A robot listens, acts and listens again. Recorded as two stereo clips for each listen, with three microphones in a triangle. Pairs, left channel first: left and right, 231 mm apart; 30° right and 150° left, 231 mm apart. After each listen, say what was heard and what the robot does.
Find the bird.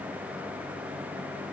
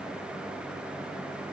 Keep listening.
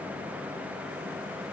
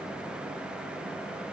Keep listening.
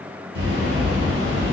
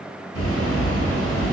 The bird: 20° right. Turn 20° right.
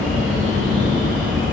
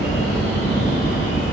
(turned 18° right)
Found it: a bird, straight ahead, 1 to 2 m away.